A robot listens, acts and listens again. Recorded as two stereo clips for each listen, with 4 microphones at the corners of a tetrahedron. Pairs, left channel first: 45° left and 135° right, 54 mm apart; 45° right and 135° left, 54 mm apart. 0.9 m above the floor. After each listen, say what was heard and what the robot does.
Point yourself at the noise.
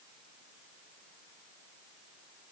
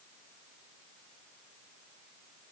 Keep listening.
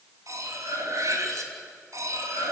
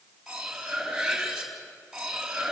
The cutlery clinking: 145° right. Turn 145° right.
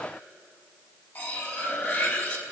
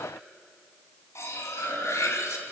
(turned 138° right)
The cutlery clinking is now 10° right. Turn 10° right.
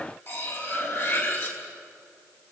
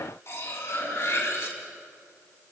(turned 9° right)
Found it: cutlery clinking, straight ahead, over 4 m away.